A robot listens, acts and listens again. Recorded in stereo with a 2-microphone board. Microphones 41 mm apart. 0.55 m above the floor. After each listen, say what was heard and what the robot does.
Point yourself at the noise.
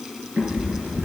The cat meowing: about 45° right or 135° right. Turn 45° right.
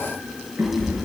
So it is at 95° right. Turn 95° right.
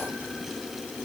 Keep listening.
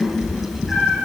Found it: a cat meowing, straight ahead.